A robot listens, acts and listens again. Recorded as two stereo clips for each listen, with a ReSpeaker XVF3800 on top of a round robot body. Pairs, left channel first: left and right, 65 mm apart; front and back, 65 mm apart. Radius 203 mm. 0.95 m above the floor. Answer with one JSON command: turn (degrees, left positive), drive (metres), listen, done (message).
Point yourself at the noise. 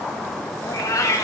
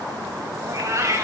{"turn": 130}
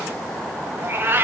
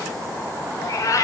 {"turn": -35}
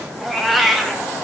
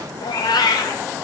{"done": "Found it: a cat meowing, straight ahead, 1 to 2 m away."}